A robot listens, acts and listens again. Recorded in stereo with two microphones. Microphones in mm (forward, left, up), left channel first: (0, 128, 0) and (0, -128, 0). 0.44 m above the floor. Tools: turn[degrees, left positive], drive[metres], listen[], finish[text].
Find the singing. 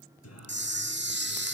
Action: turn[90]
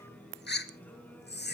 Action: finish[Found it: singing, straight ahead.]